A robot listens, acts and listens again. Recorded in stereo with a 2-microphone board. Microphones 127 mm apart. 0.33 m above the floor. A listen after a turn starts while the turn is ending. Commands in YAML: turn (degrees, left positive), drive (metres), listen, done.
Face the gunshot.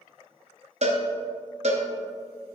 listen: true
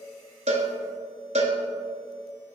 listen: true
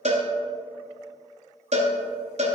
done: "I can't make out a gunshot, only a cowbell."